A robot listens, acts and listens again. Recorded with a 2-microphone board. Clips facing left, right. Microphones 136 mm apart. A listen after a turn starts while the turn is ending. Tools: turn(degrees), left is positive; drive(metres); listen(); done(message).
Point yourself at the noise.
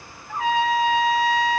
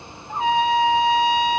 turn(degrees=-20)
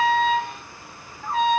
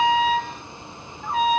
done("Facing the trumpet, 1 to 2 m away.")